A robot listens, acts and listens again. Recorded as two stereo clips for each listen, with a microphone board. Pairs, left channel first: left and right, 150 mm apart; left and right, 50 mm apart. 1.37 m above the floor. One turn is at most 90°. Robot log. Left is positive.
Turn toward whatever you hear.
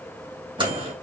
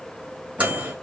note: The microwave: about 35° right or 145° right.
cmd yaw -35
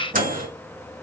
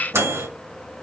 note: So it is at 110° right.
cmd yaw -90
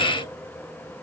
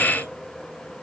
note: Nothing new. It was at 20° right.
cmd yaw -20
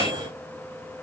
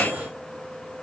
note: The microwave is now 30° right.
cmd yaw -30
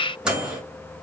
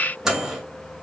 end: Facing the microwave.